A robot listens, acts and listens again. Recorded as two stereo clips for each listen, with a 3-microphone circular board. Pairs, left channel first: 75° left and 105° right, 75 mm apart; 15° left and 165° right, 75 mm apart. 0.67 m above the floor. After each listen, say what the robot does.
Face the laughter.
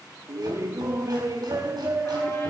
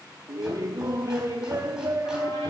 Turn 140° right.
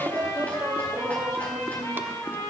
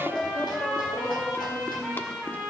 Turn 45° right.
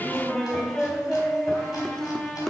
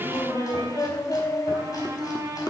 Found it: laughter, straight ahead, 1 to 2 m away.